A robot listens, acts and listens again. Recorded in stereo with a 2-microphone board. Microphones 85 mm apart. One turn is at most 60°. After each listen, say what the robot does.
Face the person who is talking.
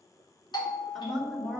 Turn 30° left.
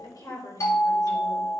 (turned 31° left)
Turn 60° left.
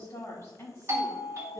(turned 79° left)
Turn 35° left.
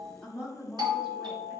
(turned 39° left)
Turn 10° right.
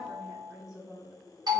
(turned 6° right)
Found it: a woman speaking, straight ahead.